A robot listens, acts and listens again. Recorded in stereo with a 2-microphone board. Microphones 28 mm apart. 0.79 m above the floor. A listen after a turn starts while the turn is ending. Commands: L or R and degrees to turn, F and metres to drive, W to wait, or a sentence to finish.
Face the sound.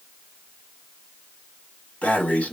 L60
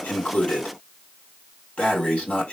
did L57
L55
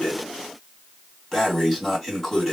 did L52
Found it: breathing, straight ahead.